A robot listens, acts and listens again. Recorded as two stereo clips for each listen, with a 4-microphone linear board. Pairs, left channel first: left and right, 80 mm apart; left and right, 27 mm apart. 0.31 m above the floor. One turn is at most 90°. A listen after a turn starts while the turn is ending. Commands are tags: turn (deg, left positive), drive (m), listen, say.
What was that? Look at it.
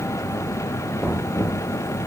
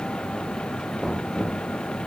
<turn deg="30"/>
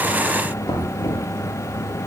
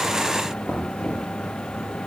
<turn deg="90"/>
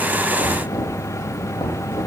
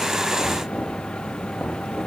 <turn deg="80"/>
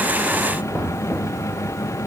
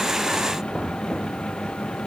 <turn deg="15"/>
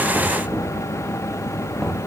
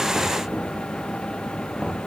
<say>Facing the knocking.</say>